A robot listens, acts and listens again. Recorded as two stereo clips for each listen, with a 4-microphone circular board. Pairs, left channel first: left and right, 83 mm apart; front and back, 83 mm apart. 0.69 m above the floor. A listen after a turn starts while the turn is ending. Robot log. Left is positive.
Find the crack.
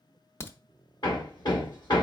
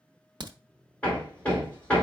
note: The crack: 150° left.
cmd yaw +150
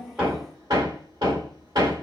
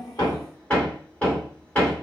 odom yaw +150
end: I heard a crack from this way, but can't make it out now.